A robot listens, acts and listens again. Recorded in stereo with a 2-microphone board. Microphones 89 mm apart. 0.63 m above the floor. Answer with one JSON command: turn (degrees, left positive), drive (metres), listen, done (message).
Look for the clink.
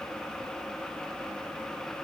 {"listen": true}
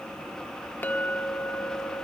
{"turn": 20}
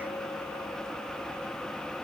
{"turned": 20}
{"listen": true}
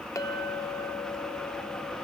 {"turn": 140}
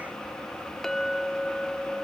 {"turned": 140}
{"done": "Found it: a clink, straight ahead."}